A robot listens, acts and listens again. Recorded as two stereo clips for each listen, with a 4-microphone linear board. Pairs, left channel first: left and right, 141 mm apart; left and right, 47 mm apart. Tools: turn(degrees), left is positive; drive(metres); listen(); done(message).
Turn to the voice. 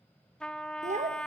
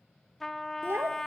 turn(degrees=-60)
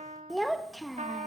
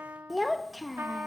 done("Found it: a child speaking, straight ahead.")